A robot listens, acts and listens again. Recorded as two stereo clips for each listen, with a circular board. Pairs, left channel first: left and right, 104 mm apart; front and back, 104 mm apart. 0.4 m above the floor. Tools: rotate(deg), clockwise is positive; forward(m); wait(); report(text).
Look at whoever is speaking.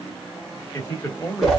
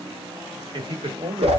rotate(-150)
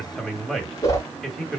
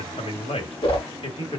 report("Facing the man speaking.")